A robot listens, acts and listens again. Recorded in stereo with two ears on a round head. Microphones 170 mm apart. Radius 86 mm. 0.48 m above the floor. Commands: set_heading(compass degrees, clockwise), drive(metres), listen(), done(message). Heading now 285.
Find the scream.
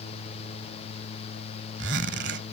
listen()
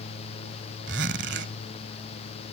listen()
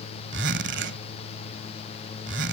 done("I can't make out a scream, only a zipper.")